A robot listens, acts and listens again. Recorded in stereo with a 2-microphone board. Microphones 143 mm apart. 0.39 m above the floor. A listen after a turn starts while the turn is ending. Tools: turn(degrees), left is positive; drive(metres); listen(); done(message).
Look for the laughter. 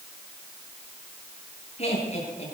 turn(degrees=50)
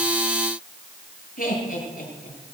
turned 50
turn(degrees=80)
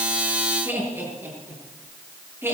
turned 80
turn(degrees=-15)
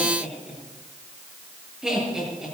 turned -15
done("Found it: laughter, straight ahead, over 4 m away.")